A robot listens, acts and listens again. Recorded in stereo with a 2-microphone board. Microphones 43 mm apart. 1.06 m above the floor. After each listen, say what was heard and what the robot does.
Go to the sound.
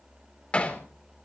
The hammering: about 30° left or 150° left. Turn 30° left.
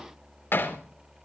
So it is at 120° left. Turn 120° left.
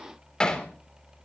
The hammering is now 20° left. Turn 20° left.
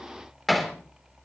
Drive 1.0 m forward.
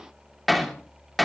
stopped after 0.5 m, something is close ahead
Something is in my way. I am facing the hammering but have not reached it.